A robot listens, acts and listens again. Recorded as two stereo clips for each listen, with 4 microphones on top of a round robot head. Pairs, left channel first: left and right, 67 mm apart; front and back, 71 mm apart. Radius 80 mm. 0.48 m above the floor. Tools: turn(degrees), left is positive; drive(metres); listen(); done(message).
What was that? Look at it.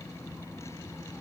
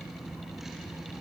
listen()
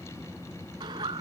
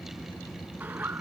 turn(degrees=-105)
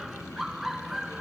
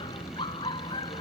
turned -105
done("Facing the laughter.")